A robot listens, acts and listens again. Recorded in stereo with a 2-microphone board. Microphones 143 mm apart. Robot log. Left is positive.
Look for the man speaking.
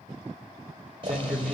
cmd yaw +30
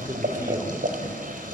cmd idle
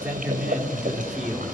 cmd yaw -30
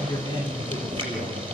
note: So it is at 35° left.
cmd yaw +35
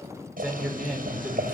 end: Found it: a man speaking, straight ahead.